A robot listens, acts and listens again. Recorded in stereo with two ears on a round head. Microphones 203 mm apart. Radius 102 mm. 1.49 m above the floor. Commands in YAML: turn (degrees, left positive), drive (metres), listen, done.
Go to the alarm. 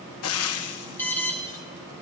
turn: 30
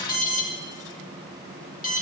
turn: 140
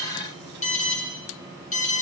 turn: 35
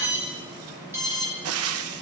turn: -10
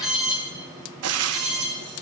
drive: 1.0
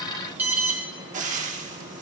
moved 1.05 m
turn: -10
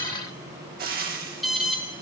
drive: 1.0
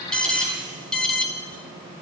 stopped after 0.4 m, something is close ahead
done: "I am next to the alarm."